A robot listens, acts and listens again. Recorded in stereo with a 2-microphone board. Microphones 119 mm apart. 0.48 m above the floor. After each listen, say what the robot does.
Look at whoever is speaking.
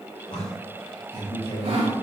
Turn 55° left.
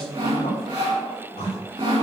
Turn 65° left.
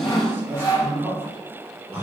Turn 20° right.
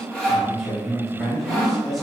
Facing the man speaking.